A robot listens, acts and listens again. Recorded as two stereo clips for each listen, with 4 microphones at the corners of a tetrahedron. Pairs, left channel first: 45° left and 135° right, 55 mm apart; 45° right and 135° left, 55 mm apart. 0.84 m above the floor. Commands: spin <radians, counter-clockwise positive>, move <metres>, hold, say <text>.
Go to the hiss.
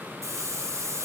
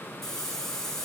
spin -2.27
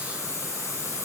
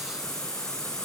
spin 0.52
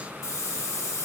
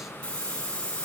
spin 0.35
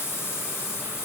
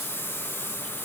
move 1.0
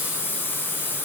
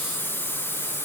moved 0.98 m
move 1.0
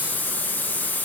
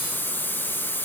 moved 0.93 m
move 1.0
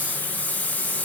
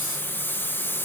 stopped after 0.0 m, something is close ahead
spin -0.17
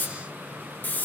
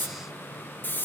say Arrived at the hiss, straight ahead.